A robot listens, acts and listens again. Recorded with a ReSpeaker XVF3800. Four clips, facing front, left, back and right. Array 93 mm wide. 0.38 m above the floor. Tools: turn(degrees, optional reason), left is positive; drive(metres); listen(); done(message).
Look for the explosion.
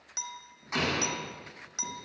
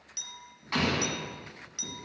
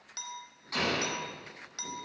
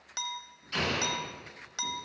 turn(degrees=70, reason="The explosion: 70° left.")
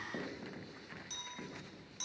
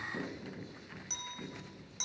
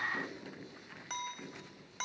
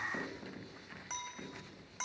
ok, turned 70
done("I heard an explosion from this way, but can't make it out now.")